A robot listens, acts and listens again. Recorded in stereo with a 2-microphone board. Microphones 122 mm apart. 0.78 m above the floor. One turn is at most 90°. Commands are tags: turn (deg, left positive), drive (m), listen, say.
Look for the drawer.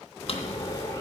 <turn deg="50"/>
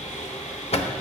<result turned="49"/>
<turn deg="70"/>
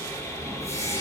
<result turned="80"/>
<turn deg="-10"/>
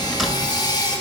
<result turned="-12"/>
<say>Found it: a drawer, straight ahead.</say>